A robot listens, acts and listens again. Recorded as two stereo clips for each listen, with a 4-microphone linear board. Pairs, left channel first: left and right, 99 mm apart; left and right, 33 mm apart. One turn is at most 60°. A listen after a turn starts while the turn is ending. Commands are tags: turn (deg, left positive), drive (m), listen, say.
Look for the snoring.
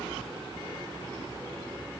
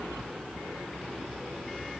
<listen/>
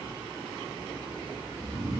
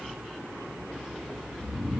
<turn deg="30"/>
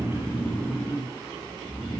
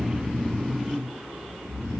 <turn deg="60"/>
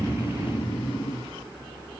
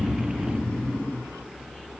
<turn deg="60"/>
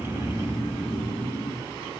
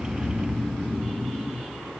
<turn deg="25"/>
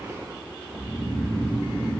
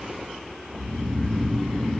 <turn deg="15"/>
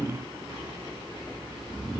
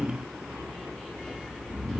<say>Facing the snoring, under 1 m away.</say>